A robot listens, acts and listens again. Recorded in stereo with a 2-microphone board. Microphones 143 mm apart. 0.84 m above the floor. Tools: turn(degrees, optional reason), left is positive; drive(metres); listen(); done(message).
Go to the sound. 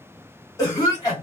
turn(degrees=25, reason="The cough: about 25° left or 155° left.")
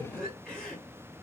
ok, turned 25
drive(metres=1.0)
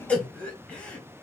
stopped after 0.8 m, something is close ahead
turn(degrees=10, reason="The cough is now 10° left.")
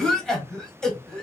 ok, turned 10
done("I am next to the cough.")